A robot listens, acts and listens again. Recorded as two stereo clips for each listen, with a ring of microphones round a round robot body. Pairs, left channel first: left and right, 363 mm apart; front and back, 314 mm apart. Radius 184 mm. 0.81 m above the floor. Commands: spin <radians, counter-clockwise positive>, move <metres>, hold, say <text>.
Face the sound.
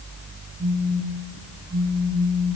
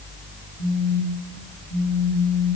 spin -0.44
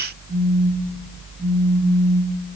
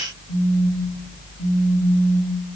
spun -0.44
say Found it: a phone buzzing, straight ahead, 2 to 4 m away.